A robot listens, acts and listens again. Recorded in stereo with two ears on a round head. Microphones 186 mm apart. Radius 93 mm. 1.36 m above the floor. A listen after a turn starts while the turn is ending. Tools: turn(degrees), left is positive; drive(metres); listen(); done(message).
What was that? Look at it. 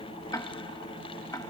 turn(degrees=15)
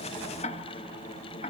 turn(degrees=145)
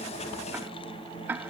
turn(degrees=-10)
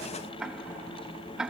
done("Found it: ticking, straight ahead.")